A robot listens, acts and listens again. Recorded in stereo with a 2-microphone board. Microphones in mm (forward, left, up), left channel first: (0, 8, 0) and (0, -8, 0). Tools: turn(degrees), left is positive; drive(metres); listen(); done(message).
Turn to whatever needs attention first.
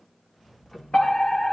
turn(degrees=70)
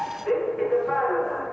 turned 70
turn(degrees=10)
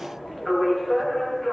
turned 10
done("Found it: a fire alarm, straight ahead.")